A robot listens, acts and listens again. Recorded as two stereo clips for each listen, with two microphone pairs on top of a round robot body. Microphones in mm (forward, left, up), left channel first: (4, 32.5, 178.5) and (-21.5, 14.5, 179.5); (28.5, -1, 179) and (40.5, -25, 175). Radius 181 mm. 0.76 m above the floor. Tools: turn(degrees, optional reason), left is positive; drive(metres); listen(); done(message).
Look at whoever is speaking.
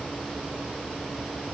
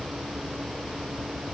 listen()
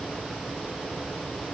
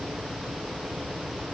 listen()
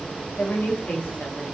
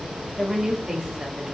done("Facing the woman speaking.")